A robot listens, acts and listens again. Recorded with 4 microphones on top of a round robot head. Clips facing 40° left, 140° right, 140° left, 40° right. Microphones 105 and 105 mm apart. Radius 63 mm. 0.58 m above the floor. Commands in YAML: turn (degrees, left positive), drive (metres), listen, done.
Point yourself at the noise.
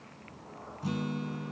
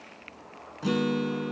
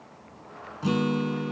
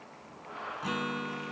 turn: -160
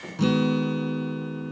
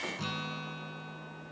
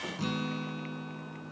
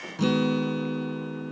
done: "Facing the guitar."